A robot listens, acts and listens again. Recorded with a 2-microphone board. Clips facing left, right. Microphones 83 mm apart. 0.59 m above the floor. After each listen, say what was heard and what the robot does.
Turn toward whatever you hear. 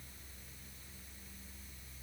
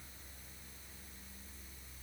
Keep listening.
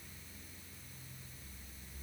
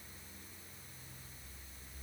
Keep listening.
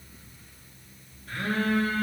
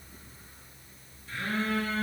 The phone buzzing: about 60° left or 120° left. Turn 60° left.
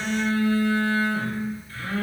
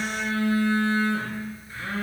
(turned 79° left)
So it is at 20° right. Turn 20° right.
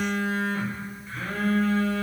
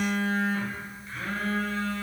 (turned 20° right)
Found it: a phone buzzing, straight ahead.